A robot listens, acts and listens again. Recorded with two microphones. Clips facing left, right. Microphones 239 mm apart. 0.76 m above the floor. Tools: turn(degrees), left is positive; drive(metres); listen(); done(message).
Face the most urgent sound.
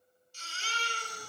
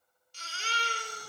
turn(degrees=-90)
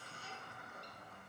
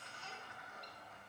listen()
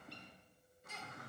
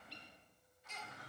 turn(degrees=10)
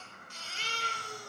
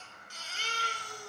done("Found it: a baby crying, straight ahead, 1 to 2 m away.")